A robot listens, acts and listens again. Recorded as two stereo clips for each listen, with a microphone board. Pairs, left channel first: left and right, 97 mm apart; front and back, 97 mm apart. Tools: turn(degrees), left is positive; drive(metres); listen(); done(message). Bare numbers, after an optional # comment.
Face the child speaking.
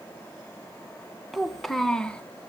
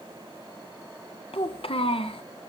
# The child speaking: 10° left.
turn(10)
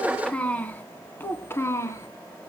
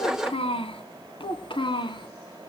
# The child speaking is now 30° left.
turn(30)
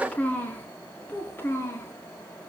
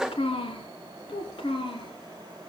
# The child speaking is now 25° left.
turn(25)
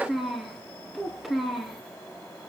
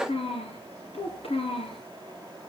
done("Facing the child speaking, 2 to 4 m away.")